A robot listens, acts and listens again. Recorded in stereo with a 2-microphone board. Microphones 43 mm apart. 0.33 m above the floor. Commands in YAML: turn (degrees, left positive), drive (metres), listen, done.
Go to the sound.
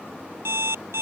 turn: -70
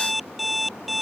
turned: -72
drive: 1.0
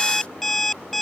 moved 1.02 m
drive: 1.0
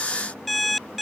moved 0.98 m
drive: 1.0
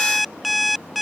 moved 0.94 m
drive: 1.0
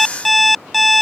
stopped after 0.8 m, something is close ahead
done: "Arrived at the alarm clock, straight ahead."